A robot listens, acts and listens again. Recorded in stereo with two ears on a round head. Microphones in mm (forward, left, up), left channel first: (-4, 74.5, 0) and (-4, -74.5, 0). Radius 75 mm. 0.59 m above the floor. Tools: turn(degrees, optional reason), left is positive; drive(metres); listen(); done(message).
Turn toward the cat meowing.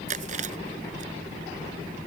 listen()
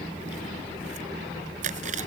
listen()
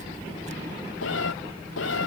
turn(degrees=90)
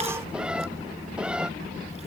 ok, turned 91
done("Facing the cat meowing.")